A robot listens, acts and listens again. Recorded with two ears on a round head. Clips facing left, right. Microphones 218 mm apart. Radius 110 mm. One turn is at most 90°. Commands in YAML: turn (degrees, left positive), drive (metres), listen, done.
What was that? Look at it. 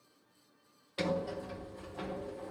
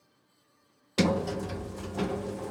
turn: -60
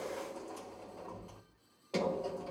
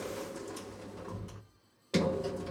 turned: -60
turn: -30
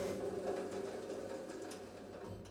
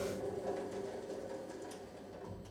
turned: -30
turn: 10
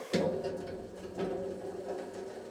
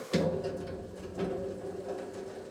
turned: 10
done: "Found it: a sliding door, straight ahead."